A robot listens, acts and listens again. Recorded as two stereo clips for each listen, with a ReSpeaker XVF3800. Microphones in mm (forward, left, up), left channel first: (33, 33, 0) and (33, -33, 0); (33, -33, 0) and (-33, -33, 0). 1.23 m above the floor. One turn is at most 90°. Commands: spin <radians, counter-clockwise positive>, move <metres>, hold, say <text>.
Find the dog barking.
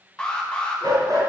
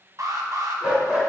spin -1.57
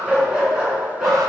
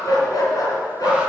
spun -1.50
spin -0.17
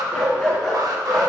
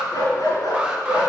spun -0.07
say Found it: a dog barking, straight ahead.